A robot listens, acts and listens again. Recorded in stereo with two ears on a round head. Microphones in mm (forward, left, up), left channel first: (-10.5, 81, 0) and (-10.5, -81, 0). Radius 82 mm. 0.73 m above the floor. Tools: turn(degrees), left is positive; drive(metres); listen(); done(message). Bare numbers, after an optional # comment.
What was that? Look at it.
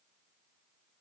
listen()
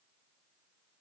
listen()
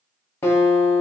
turn(30)
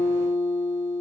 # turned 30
# So it is at 135° left.
turn(135)
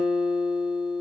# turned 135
done("Facing the guitar, 1 to 2 m away.")